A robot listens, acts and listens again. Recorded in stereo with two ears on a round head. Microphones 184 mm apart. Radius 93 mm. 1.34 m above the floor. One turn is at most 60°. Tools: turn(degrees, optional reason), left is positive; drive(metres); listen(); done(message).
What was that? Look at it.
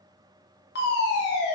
turn(degrees=55, reason="The fire alarm: about 55° left or 125° left.")
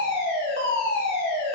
turn(degrees=60, reason="So it is at 60° left.")
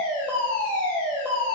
turn(degrees=10, reason="The fire alarm is now 10° left.")
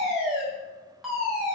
done("Facing the fire alarm, 1 to 2 m away.")